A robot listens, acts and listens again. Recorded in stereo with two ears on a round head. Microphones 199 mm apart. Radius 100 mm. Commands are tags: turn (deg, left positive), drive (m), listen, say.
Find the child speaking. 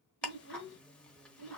<turn deg="55"/>
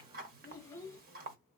<turn deg="15"/>
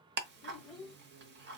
<say>Found it: a child speaking, straight ahead.</say>